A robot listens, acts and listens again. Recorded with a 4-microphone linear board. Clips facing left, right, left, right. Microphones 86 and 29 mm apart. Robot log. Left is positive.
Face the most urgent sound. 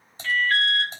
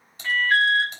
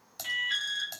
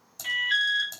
note: The alarm: about 15° right or 165° right.
cmd yaw -15
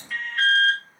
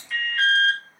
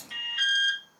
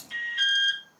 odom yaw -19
end: Found it: an alarm, straight ahead, 2 to 4 m away.